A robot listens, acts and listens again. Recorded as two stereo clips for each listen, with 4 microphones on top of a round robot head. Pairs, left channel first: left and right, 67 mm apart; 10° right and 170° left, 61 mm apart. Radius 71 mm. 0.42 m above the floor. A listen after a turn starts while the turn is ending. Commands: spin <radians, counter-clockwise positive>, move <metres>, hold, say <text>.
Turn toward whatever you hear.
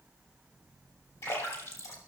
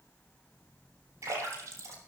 spin 2.36
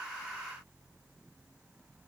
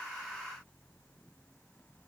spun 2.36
say I heard a splash from this way, but can't make it out now.